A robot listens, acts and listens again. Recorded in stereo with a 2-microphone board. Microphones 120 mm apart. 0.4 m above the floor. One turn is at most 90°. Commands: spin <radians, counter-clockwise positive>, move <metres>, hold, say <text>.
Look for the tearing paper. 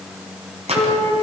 spin -1.05
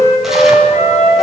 hold
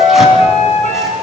hold
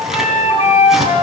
say Facing the tearing paper.